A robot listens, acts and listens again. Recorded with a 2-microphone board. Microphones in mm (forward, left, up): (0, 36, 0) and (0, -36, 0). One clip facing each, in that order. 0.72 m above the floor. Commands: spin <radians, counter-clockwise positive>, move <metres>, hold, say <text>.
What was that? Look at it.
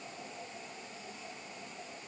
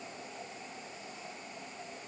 hold
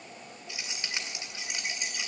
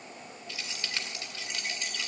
spin 0.35
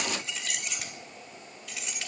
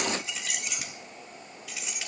say Facing the keys jangling, 2 to 4 m away.